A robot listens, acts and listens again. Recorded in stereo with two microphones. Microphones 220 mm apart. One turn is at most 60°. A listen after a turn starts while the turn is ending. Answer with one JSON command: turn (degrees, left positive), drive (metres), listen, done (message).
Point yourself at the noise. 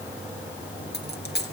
{"turn": 50}
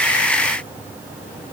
{"listen": true}
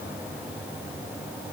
{"done": "I heard a dropped coin, but can't make it out now. It was about straight ahead or 80° left."}